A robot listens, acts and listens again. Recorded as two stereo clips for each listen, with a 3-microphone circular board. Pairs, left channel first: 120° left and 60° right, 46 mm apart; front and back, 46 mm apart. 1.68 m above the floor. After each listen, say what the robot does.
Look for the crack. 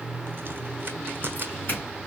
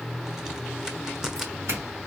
Turn 100° right.
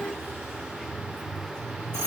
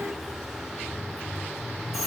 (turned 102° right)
Facing where the crack came from. I can't hear it now.